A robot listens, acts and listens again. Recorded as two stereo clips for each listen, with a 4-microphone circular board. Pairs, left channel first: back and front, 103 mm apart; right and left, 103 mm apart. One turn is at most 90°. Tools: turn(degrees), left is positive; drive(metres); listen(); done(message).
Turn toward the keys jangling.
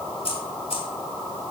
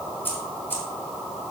turn(degrees=-90)
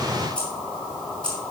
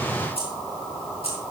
turn(degrees=-90)
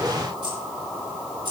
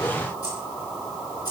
turn(degrees=-40)
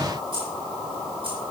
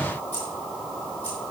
turn(degrees=-15)
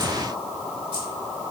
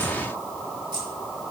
listen()
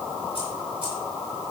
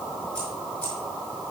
listen()
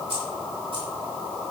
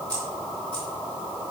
turn(degrees=-10)
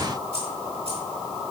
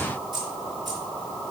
done("Found it: keys jangling, straight ahead.")